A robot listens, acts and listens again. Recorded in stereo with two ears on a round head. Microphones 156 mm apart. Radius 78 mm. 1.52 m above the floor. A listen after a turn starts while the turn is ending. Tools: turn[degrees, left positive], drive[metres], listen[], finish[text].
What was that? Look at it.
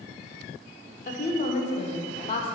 Thought: The woman speaking: about 35° left or 145° left.
Action: turn[35]
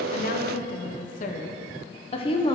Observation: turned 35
Thought: The woman speaking: about 30° left or 150° left.
Action: turn[30]
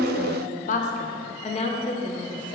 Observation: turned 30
Thought: The woman speaking: about 30° left or 150° left.
Action: turn[30]
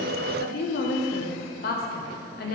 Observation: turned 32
Thought: So it is at 120° left.
Action: turn[120]
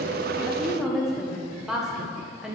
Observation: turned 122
Action: finish[Found it: a woman speaking, straight ahead.]